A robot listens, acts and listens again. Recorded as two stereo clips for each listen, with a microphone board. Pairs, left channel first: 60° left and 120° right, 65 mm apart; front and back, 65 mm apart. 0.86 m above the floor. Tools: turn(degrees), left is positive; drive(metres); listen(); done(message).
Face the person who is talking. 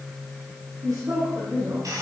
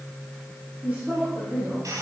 turn(degrees=-115)
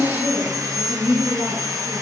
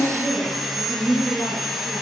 turn(degrees=-55)
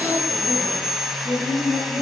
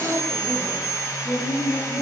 done("Facing the woman speaking, over 4 m away.")